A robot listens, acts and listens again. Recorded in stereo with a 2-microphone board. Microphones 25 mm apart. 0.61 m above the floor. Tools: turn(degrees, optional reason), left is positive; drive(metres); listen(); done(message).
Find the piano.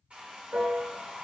turn(degrees=-90)
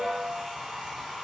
turn(degrees=10, reason="So it is at 10° left.")
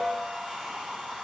done("Found it: a piano, straight ahead, 2 to 4 m away.")